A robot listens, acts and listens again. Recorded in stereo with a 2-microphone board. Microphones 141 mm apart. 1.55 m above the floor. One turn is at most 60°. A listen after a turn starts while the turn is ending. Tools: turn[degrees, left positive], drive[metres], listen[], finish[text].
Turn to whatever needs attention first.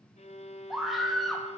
Action: turn[30]
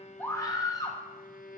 Thought: So it is at 155° left.
Action: turn[60]
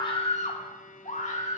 Thought: The scream is now 120° left.
Action: turn[60]
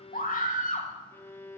Thought: The scream is now 70° left.
Action: turn[60]
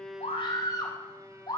Thought: The scream is now 30° left.
Action: turn[30]
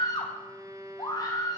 Thought: The scream is now 30° left.
Action: turn[30]
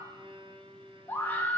Thought: The scream is now 15° left.
Action: turn[15]
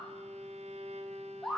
Action: finish[Facing the scream, 2 to 4 m away.]